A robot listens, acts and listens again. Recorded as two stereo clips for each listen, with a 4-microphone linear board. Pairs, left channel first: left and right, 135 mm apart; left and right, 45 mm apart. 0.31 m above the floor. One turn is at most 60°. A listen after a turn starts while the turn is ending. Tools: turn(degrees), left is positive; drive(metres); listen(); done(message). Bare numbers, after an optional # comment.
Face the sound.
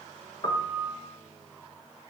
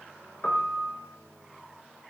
# The piano: about 35° left or 145° left.
turn(35)
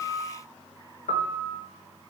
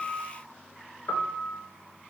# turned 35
# So it is at 110° left.
turn(60)
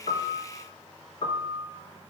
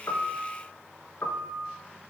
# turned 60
# The piano is now 50° left.
turn(50)
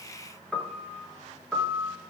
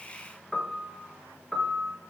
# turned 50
done("Found it: a piano, straight ahead.")